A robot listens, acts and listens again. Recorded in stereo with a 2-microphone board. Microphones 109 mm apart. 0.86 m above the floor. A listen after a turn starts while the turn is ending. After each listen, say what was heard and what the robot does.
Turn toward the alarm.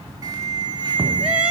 The alarm: about 35° right or 145° right. Turn 35° right.
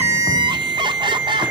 Found it: an alarm, straight ahead.